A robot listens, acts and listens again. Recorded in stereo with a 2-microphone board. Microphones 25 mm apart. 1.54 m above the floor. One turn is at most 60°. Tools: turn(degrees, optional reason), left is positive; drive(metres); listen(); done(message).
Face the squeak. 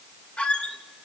turn(degrees=55, reason="The squeak: about 55° left or 125° left.")
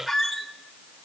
done("Facing the squeak.")